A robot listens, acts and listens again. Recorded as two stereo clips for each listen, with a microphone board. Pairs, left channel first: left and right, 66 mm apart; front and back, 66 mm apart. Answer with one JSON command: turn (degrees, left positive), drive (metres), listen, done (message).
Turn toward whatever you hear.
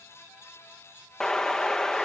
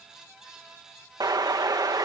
{"turn": 170}
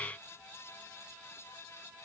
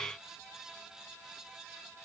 {"done": "Facing where the explosion came from. I can't hear it now."}